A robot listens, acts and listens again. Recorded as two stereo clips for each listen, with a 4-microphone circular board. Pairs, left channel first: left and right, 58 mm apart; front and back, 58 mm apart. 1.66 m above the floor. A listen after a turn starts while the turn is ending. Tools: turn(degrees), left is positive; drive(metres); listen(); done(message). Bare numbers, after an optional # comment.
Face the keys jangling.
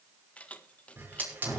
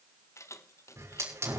# The keys jangling: 20° left.
turn(20)
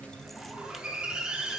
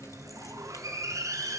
listen()
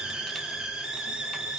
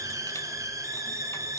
listen()
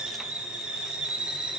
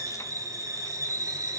done("I heard keys jangling from this way, but can't make it out now.")